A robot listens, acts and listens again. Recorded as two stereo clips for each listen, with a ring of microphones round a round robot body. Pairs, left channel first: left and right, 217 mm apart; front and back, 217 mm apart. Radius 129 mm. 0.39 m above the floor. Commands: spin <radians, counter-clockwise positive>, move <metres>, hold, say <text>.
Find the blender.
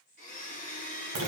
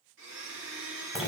spin 2.44
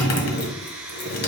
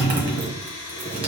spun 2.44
spin -0.17
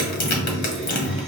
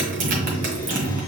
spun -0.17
hold
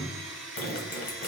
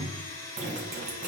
say Found it: a blender, straight ahead, 1 to 2 m away.